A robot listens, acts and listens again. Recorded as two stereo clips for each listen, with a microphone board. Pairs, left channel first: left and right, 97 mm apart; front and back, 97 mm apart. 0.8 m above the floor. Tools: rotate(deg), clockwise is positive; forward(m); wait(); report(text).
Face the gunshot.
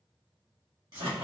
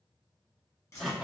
wait()
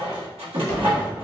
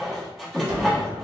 rotate(-130)
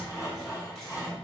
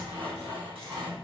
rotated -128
report("I heard a gunshot from this way, but can't make it out now.")